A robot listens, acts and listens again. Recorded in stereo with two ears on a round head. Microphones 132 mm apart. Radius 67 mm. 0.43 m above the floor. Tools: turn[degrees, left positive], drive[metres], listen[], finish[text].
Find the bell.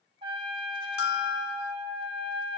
Action: turn[90]
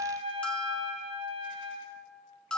Action: finish[Found it: a bell, straight ahead.]